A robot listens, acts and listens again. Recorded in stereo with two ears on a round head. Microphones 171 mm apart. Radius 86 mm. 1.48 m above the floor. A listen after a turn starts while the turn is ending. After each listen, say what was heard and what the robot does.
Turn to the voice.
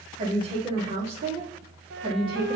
The woman speaking: about 25° right or 155° right. Turn 25° right.
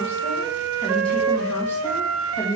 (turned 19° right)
So it is at 25° left. Turn 25° left.
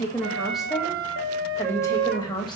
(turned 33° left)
The woman speaking is now 25° left. Turn 25° left.
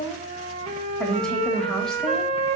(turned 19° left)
Found it: a woman speaking, straight ahead, 1 to 2 m away.